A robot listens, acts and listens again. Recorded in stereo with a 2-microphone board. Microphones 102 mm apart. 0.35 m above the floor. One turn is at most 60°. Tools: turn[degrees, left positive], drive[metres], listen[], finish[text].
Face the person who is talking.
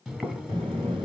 Thought: The child speaking: about 50° right or 130° right.
Action: turn[-50]
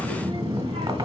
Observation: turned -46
Thought: So it is at 75° right.
Action: turn[-60]
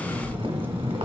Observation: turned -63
Thought: The child speaking is now 20° right.
Action: turn[-20]
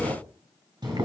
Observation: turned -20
Action: finish[Facing the child speaking.]